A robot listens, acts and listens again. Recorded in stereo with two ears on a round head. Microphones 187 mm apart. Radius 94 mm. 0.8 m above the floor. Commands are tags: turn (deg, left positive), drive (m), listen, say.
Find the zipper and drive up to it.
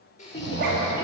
<turn deg="-45"/>
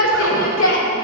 <listen/>
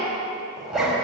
<drive m="1.0"/>
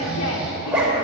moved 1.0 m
<drive m="1.0"/>
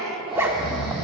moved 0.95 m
<turn deg="-10"/>
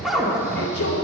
<drive m="1.0"/>
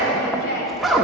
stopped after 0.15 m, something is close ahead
<say>I am next to the zipper.</say>